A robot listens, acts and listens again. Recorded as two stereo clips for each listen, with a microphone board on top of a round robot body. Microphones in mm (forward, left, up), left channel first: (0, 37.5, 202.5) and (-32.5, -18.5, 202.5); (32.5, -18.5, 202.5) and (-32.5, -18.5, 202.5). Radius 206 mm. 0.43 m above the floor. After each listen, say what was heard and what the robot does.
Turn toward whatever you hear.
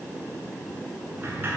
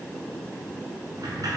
The sliding door: 175° right. Turn 175° right.
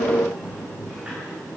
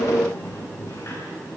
The sliding door is now 50° right. Turn 50° right.
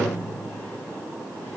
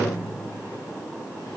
Facing the sliding door, over 4 m away.